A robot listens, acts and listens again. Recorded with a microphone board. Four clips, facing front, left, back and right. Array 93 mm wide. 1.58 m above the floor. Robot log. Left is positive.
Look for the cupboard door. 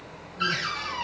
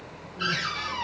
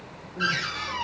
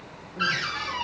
note: The cupboard door: 105° right.
cmd yaw -105
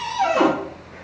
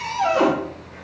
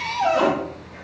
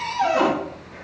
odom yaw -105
end: Found it: a cupboard door, straight ahead, 1 to 2 m away.